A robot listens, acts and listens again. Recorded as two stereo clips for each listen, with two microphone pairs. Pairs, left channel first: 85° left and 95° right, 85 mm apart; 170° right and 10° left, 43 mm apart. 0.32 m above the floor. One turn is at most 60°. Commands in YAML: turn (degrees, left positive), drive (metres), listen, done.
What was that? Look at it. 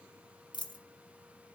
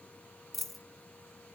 turn: 60
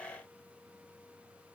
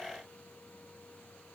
turn: 45
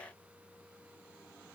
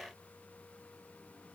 done: "I heard a dropped coin from this way, but can't make it out now."